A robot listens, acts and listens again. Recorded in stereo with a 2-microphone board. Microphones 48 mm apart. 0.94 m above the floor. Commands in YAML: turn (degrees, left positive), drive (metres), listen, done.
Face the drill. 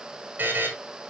listen: true
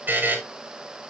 listen: true
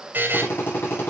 turn: 55
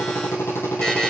turn: 65
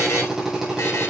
done: "Facing the drill."